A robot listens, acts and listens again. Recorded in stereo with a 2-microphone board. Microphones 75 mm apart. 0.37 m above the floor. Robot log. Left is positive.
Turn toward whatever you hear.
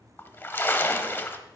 note: The splash: about 30° left or 150° left.
cmd yaw +30
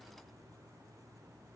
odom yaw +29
cmd idle
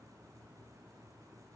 end: I heard a splash, but can't make it out now. It was about straight ahead or 120° left.